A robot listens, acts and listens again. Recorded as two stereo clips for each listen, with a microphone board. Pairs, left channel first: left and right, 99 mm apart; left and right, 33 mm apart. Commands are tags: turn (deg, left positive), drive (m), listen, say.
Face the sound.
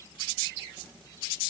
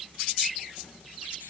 <listen/>
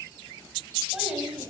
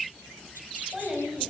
<turn deg="30"/>
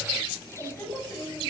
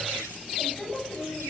<turn deg="145"/>
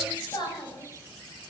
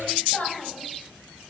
<turn deg="45"/>
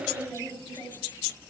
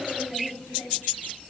<turn deg="15"/>
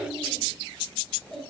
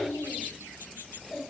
<say>Found it: a child speaking, straight ahead.</say>